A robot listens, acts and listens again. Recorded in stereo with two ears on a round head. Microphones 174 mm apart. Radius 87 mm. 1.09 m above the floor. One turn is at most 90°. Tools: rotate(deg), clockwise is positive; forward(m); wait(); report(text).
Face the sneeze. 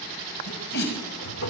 rotate(-60)
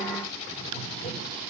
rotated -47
wait()
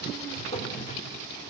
report("I heard a sneeze, but can't make it out now. It was about 15° left or 70° left.")